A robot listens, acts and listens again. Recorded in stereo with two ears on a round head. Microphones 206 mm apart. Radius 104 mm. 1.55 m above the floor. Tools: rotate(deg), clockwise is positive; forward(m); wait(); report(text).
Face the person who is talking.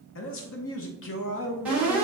rotate(-60)
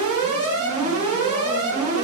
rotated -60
wait()
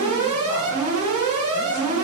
wait()
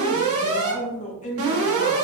rotate(-35)
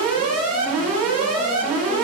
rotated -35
wait()
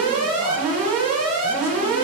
wait()
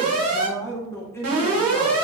rotate(-10)
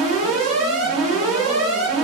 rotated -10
wait()
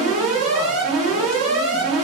wait()
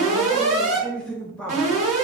report("Facing the man speaking, under 1 m away.")